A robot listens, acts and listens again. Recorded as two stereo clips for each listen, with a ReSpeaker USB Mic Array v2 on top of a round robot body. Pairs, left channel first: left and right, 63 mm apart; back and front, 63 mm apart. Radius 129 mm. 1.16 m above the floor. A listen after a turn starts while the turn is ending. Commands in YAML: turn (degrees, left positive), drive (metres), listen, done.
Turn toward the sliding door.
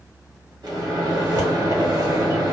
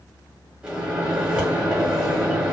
listen: true
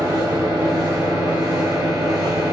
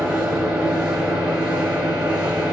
listen: true
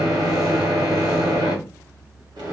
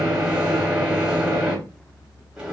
done: "I can't make out a sliding door to turn to."